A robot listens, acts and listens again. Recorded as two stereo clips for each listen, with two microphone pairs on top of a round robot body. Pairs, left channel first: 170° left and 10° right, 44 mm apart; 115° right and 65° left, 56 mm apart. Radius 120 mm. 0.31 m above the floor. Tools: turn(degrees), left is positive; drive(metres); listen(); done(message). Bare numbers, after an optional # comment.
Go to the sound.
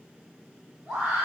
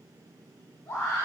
# The scream: 95° right.
turn(-95)
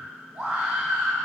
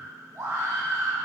# The scream is now 15° left.
turn(15)
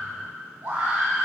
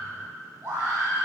drive(1.0)
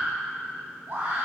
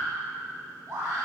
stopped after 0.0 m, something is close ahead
done("Something is in my way. I am facing the scream but have not reached it.")